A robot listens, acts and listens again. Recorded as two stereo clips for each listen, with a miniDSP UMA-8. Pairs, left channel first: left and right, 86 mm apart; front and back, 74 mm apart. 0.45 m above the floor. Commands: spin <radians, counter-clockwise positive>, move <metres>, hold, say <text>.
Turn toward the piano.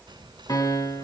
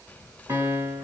spin 2.27
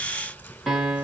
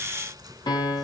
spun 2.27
say Facing the piano, 2 to 4 m away.